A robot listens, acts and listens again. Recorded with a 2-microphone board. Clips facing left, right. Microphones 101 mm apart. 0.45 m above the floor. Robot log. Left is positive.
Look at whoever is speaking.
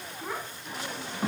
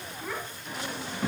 note: The child speaking: about 25° left or 155° left.
cmd yaw +25
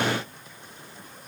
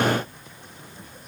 cmd idle
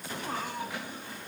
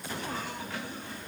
cmd idle
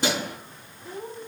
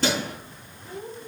note: So it is at 130° left.
cmd yaw +130
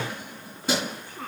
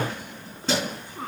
note: The child speaking is now 20° right.
cmd yaw -20
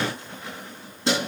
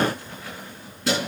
cmd idle
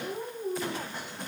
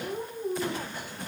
end: Found it: a child speaking, straight ahead.